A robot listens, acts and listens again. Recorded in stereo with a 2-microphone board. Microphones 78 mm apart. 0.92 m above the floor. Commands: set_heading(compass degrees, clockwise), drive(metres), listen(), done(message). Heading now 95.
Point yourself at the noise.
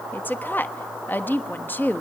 set_heading(70)
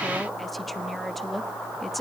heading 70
done("Facing the woman speaking, 1 to 2 m away.")